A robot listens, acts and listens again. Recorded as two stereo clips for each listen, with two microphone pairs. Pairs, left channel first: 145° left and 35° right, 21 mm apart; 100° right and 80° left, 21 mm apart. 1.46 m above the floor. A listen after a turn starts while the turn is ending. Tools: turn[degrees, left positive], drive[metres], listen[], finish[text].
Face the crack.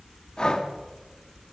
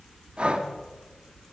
Action: listen[]
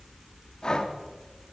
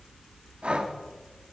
Action: listen[]
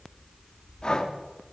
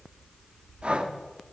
Action: finish[I can't make out a crack, only breathing.]